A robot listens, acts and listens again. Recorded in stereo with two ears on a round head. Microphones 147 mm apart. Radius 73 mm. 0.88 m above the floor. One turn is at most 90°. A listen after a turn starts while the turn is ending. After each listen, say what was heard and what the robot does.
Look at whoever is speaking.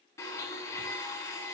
Keep listening.
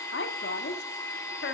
The woman speaking: about 75° left or 105° left. Turn 75° left.
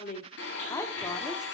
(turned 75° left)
So it is at 20° left. Turn 20° left.
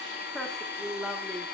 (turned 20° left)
Found it: a woman speaking, straight ahead, 1 to 2 m away.